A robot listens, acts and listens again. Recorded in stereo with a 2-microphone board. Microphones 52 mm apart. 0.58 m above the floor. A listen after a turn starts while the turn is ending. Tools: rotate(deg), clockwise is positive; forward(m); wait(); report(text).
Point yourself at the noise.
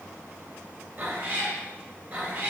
rotate(20)
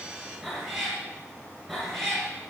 report("Facing the cat meowing, over 4 m away.")